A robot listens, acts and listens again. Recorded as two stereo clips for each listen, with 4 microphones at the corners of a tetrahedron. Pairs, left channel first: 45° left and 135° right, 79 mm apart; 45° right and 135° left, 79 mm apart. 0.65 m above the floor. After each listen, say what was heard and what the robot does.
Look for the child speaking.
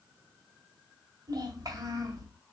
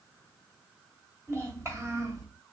The child speaking: straight behind. Turn 180° left.
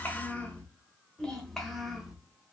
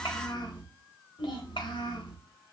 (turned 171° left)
The child speaking is now 45° right. Turn 45° right.
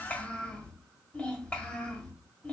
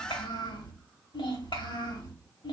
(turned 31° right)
The child speaking is now 30° right. Turn 30° right.
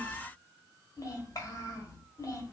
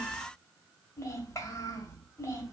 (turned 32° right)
Found it: a child speaking, straight ahead, 1 to 2 m away.